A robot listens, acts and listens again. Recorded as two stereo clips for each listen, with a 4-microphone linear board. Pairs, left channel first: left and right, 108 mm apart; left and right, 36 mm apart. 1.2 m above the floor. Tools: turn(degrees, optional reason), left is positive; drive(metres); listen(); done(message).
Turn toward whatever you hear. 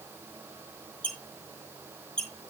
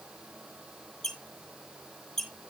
turn(degrees=30)
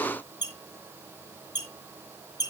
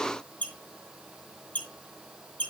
turn(degrees=145, reason="So it is at 145° left.")
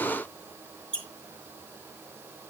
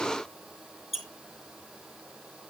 done("Facing the squeak.")